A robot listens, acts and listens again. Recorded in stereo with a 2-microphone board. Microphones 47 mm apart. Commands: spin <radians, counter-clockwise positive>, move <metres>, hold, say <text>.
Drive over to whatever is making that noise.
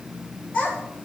spin 0.52
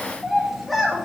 move 1.0
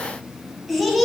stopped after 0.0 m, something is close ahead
say Something is in my way. I am facing the child speaking but have not reached it.